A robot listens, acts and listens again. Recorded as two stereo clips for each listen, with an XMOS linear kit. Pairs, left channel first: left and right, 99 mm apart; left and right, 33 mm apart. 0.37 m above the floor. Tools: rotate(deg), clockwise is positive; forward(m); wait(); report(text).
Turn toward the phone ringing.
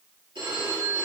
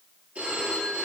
rotate(60)
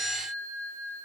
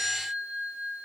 rotate(65)
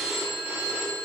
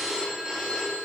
rotate(25)
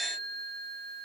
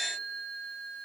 report("Facing the phone ringing.")